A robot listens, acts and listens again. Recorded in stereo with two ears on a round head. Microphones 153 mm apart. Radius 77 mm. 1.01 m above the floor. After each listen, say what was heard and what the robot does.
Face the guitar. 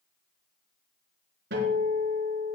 The guitar: about 65° right or 115° right. Turn 65° right.
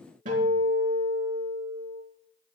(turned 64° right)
So it is at 45° right. Turn 45° right.
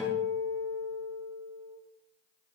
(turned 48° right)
Found it: a guitar, straight ahead.